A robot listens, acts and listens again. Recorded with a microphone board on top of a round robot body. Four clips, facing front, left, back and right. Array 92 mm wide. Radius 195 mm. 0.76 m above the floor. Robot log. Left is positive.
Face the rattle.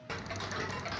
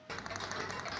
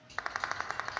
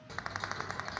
note: The rattle: 160° right.
cmd yaw -160
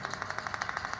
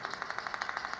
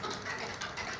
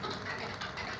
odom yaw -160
note: The rattle is now 35° left.
cmd yaw +35
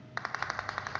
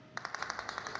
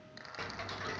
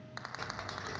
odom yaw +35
note: The rattle is now 15° left.
cmd yaw +15
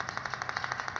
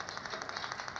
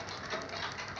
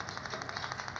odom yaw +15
end: Facing the rattle.